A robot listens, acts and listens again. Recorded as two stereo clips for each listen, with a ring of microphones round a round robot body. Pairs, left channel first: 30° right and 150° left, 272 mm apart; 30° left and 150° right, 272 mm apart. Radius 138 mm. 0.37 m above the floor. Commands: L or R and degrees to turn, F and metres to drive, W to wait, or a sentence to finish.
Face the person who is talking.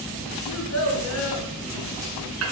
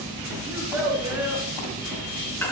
R70
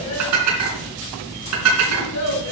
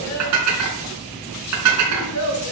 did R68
Found it: a child speaking, straight ahead.